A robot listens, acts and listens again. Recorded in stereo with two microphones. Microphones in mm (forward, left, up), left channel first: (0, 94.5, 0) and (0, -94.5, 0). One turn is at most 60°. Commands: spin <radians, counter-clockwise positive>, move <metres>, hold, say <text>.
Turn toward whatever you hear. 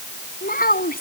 spin 0.87
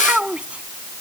say Found it: a child speaking, straight ahead.